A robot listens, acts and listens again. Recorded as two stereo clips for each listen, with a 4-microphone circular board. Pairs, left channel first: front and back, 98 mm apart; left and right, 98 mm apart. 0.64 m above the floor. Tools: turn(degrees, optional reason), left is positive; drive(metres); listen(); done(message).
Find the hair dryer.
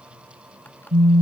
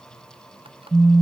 listen()
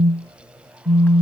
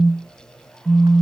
listen()
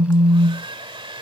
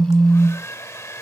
turn(degrees=150, reason="The hair dryer: 150° left.")
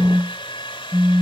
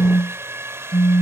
turn(degrees=-25, reason="The hair dryer is now 25° right.")
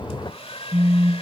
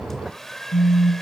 done("Facing the hair dryer.")